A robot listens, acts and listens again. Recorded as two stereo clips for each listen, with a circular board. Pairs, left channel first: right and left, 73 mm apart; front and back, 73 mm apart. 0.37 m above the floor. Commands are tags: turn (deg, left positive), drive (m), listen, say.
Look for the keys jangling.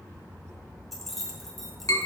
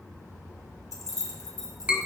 <say>Facing the keys jangling.</say>